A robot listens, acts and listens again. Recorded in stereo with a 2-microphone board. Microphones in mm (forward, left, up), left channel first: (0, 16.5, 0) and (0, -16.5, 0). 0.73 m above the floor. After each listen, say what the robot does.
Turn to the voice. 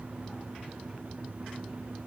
Keep listening.
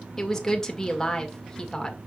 Turn 15° left.
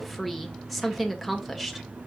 Found it: a woman speaking, straight ahead, 1 to 2 m away.